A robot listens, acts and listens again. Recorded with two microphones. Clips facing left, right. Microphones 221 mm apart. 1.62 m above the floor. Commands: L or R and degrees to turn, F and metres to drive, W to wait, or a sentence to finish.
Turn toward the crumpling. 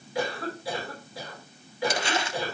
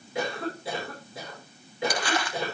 L25
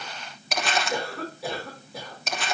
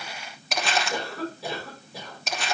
Found it: crumpling, straight ahead, 1 to 2 m away.